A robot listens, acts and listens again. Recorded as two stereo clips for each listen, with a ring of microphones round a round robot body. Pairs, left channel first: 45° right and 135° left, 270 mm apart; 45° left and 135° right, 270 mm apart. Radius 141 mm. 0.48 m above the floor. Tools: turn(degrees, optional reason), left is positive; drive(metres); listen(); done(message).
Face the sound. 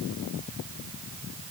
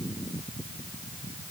listen()
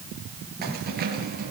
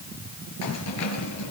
listen()
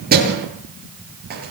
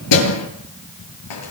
turn(degrees=80, reason="The keys jangling: 80° left.")
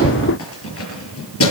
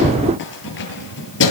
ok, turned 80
done("Facing the keys jangling.")